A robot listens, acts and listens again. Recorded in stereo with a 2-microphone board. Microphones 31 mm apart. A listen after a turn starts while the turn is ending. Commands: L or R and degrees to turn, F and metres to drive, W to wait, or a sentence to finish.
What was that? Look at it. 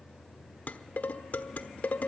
L60
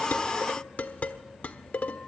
L60
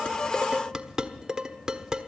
R20
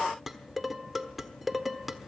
Facing the dishes clattering, 1 to 2 m away.